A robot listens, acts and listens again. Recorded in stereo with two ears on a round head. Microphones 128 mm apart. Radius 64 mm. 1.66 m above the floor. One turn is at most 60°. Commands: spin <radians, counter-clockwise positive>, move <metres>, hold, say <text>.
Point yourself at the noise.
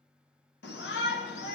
spin 1.05
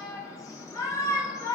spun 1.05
spin 0.44
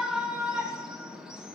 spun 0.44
say Facing the shout, 1 to 2 m away.